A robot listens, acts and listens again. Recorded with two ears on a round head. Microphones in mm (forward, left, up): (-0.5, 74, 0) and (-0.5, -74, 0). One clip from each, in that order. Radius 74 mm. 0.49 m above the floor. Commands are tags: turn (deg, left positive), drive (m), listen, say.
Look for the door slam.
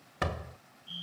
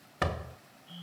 <turn deg="30"/>
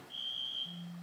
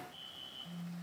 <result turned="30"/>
<listen/>
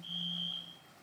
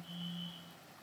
<say>I heard a door slam, but can't make it out now. It was about 30° right or 150° left.</say>